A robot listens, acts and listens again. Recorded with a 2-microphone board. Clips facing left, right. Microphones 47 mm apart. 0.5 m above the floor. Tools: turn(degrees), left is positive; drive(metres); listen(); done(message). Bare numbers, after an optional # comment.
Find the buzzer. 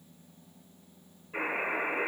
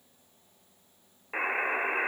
# The buzzer: about 70° right or 110° right.
turn(-70)
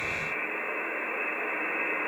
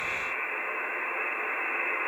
# So it is at 10° right.
turn(-10)
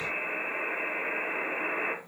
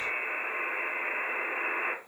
done("Facing the buzzer, under 1 m away.")